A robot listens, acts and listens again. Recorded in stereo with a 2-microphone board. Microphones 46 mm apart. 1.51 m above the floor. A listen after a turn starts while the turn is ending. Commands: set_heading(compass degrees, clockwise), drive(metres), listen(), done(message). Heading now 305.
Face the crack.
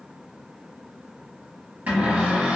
listen()
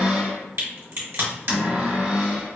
set_heading(10)
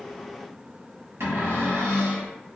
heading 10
listen()
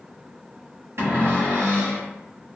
done("I heard a crack, but can't make it out now. It was about straight ahead or 50° right.")